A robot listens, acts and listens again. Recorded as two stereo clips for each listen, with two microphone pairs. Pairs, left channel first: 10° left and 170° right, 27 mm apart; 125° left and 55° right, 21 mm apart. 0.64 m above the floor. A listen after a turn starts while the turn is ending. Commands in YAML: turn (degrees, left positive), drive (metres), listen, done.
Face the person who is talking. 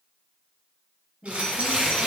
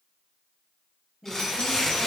turn: -135
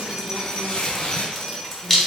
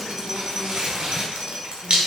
listen: true
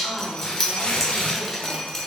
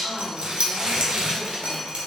done: "Found it: a woman speaking, straight ahead, 1 to 2 m away."